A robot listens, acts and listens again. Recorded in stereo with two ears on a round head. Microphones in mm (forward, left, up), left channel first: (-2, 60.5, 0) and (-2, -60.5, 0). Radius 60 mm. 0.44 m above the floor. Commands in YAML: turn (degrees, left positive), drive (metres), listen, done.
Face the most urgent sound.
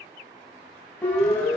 turn: 30
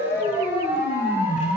turn: -15
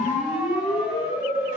done: "Facing the siren."